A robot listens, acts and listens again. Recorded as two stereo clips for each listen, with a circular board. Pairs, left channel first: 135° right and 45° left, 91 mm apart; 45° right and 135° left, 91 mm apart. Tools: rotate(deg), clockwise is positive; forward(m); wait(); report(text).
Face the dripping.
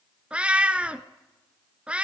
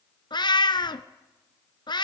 wait()
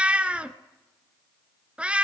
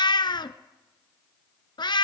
wait()
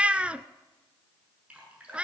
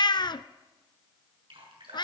rotate(-120)
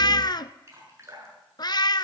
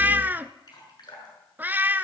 rotate(10)
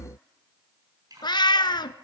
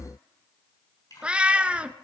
report("Found it: dripping, straight ahead, over 4 m away.")